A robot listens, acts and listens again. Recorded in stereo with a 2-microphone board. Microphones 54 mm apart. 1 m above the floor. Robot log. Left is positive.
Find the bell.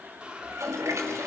cmd idle
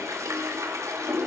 cmd idle
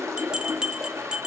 note: The bell: about 15° right or 165° right.
cmd yaw -15
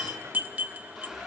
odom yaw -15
note: So it is at 150° right.
cmd yaw -150
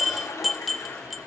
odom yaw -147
end: Facing the bell, under 1 m away.